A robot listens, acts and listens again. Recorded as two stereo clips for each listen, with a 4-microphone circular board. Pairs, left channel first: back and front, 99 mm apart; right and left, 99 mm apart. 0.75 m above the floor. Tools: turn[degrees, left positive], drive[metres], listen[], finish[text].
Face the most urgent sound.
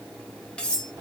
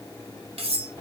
Action: listen[]
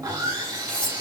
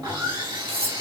Action: listen[]
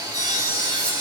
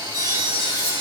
Action: finish[I can't make out anything urgent, only sawing and cutlery clinking.]